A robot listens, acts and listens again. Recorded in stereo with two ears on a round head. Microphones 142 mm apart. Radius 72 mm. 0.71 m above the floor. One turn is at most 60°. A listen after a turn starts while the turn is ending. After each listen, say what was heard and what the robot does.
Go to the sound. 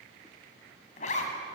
The zipper: about 45° left or 135° left. Turn 45° left.
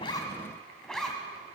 Drive 1.0 m forward.
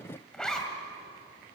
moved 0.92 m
Drive 1.0 m forward.
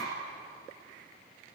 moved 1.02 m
Keep listening.
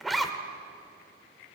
Drive 1.0 m forward.
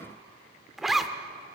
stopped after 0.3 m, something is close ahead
I am next to the zipper.